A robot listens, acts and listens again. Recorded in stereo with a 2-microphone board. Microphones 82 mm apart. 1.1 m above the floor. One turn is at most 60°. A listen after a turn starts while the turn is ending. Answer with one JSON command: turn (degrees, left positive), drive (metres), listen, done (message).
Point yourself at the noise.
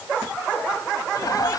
{"turn": 45}
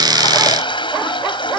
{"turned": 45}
{"turn": 60}
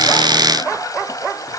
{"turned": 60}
{"turn": 45}
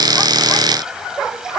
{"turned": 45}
{"listen": true}
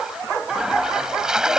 {"turn": -10}
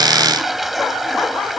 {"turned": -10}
{"done": "Found it: a toilet flushing, straight ahead."}